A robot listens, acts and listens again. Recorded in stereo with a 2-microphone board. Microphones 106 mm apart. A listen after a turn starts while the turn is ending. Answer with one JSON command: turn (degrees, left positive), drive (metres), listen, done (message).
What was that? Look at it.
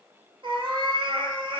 {"turn": -50}
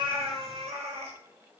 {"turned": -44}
{"turn": -80}
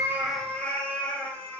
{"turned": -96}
{"turn": 15}
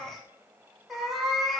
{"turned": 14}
{"done": "Facing the cat meowing, under 1 m away."}